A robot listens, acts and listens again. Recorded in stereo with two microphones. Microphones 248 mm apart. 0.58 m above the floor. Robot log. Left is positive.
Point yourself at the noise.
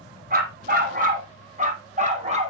note: The dog barking: about 25° right or 155° right.
cmd yaw -25
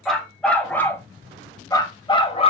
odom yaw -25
note: So it is at 25° left.
cmd yaw +25
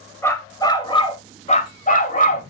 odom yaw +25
note: The dog barking is now 35° left.
cmd yaw +35
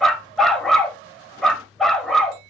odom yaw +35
end: Found it: a dog barking, straight ahead.